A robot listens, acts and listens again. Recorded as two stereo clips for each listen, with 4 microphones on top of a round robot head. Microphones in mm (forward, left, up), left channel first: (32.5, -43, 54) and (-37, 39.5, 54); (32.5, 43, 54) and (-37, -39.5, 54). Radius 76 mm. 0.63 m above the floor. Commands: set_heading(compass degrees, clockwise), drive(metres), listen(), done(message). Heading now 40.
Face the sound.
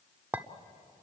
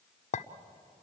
set_heading(345)
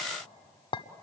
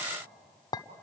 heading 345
done("Found it: a clink, straight ahead.")